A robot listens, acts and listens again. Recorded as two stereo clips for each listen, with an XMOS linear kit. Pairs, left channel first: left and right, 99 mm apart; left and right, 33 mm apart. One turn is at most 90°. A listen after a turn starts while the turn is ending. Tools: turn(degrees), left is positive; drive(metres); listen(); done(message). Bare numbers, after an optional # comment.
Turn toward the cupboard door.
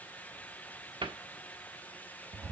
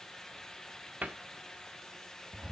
# The cupboard door: about 60° right or 120° right.
turn(-60)
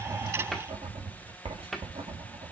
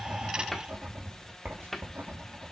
done("Facing the cupboard door.")